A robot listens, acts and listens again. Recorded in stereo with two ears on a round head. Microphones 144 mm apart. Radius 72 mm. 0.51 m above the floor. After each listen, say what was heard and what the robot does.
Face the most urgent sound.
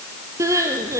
The crying: about 20° right or 160° right. Turn 20° right.
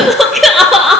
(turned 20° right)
Facing the crying, 2 to 4 m away.